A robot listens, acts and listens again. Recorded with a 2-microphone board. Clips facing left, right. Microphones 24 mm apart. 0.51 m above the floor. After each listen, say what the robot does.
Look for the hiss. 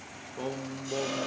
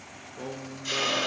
Turn 50° right.
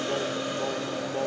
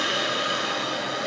Turn 80° right.
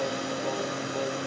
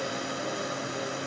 Facing the hiss.